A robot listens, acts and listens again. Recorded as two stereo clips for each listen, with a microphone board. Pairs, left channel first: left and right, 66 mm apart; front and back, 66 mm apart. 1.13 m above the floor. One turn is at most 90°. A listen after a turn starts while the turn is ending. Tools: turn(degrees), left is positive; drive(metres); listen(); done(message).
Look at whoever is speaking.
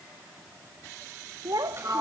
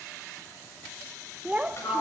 turn(degrees=-90)
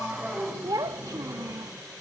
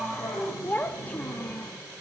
turn(degrees=-65)
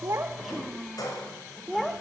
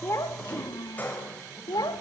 done("Found it: a child speaking, straight ahead.")